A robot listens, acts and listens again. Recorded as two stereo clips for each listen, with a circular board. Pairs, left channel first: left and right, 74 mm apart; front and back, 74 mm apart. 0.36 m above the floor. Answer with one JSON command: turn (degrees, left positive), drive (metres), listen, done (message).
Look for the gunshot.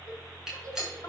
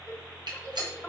{"turn": -175}
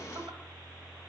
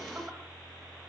{"done": "Facing where the gunshot came from. I can't hear it now."}